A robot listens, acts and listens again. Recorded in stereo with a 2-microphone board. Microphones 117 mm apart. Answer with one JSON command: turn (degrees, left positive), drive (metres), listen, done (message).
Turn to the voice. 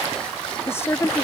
{"turn": 20}
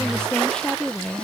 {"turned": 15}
{"done": "Found it: a woman speaking, straight ahead."}